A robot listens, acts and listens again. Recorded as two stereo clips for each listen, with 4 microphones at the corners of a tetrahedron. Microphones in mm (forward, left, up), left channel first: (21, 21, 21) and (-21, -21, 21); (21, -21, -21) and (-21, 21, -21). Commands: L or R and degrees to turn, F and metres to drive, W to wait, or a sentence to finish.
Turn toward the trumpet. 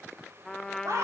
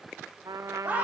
L130
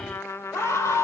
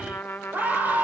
Facing the trumpet.